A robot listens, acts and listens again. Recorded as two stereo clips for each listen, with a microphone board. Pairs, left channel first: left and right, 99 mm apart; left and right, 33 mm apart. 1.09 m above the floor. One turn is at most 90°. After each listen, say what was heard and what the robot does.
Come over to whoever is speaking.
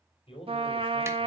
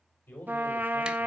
The man speaking: about 70° left or 110° left. Turn 70° left.
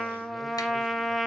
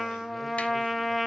Keep listening.
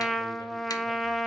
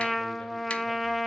Keep listening.
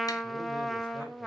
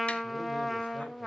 I heard a man speaking, but can't make it out now. It was about straight ahead or 40° left. I did not reach it.